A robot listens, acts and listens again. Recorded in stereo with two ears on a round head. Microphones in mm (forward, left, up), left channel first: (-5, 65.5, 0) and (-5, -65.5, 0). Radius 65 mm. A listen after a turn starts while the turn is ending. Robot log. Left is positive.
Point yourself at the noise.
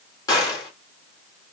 note: The gunshot: about 25° left or 155° left.
cmd yaw +25
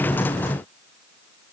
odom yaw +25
cmd idle
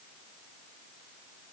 end: I heard a gunshot, but can't make it out now. It was about straight ahead or 130° left.